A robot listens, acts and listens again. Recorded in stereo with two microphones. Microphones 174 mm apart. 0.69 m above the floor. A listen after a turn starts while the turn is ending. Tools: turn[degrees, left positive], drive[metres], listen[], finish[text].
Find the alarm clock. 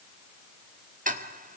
Action: listen[]
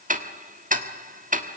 Action: listen[]
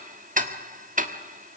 Action: finish[I can't make out an alarm clock to turn to.]